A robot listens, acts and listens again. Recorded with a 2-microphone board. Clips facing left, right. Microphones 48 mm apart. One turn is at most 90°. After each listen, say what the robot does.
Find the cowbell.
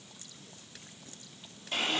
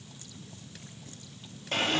Keep listening.
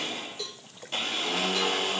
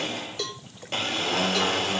Turn 70° right.
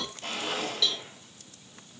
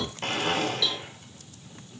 Facing the cowbell.